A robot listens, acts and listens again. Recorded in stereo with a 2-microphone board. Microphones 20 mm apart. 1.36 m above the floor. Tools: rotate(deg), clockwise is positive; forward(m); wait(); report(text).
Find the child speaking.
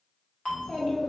rotate(-60)
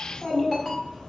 rotate(-30)
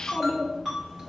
rotate(35)
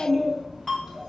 rotate(25)
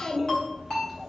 rotate(15)
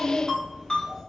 report("Facing the child speaking.")